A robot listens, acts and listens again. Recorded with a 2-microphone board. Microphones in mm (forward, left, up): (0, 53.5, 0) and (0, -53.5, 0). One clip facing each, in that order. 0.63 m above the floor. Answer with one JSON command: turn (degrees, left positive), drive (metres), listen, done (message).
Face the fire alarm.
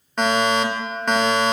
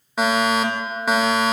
{"turn": -30}
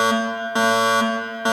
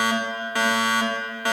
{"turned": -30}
{"turn": 25}
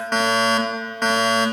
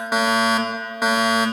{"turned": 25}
{"turn": -10}
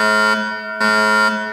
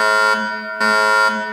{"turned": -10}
{"done": "Found it: a fire alarm, straight ahead."}